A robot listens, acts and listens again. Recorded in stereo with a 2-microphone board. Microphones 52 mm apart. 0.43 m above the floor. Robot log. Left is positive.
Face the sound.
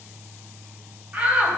note: The shout: about 25° right or 155° right.
cmd yaw -25
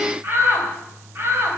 note: So it is at 125° right.
cmd yaw -125
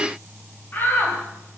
note: The shout is now 40° left.
cmd yaw +40
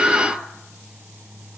end: Found it: a shout, straight ahead.